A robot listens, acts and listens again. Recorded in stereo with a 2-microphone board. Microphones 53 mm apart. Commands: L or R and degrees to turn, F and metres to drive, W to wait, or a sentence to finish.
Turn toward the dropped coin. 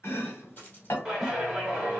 L30
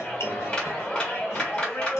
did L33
W
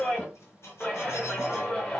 I heard a dropped coin, but can't make it out now. It was about 5° right or 120° left.